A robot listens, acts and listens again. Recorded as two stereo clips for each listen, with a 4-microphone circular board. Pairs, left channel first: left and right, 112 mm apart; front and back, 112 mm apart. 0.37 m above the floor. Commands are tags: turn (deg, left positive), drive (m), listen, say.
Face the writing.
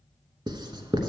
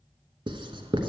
<turn deg="-135"/>
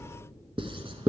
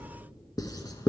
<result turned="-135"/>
<turn deg="-55"/>
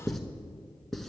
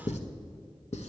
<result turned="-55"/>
<say>Found it: writing, straight ahead, under 1 m away.</say>